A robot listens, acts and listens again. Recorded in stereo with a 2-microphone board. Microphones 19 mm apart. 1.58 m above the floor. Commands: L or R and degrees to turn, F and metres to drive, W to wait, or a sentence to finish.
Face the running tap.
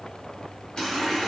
L40
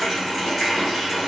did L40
Facing the running tap, 1 to 2 m away.